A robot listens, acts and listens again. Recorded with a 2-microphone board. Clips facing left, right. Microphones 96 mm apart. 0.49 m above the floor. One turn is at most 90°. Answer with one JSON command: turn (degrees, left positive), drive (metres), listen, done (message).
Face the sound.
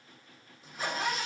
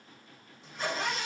{"turn": 30}
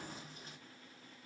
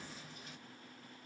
{"listen": true}
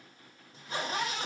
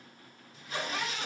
{"turn": 90}
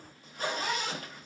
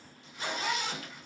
{"turn": 45}
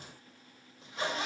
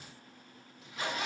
{"turn": 30}
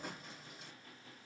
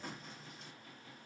{"done": "Found it: a zipper, straight ahead."}